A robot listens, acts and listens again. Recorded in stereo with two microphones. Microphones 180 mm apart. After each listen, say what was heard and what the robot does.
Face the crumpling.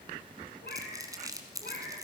The crumpling: about 20° right or 160° right. Turn 20° right.
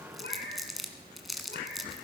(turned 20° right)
Facing the crumpling.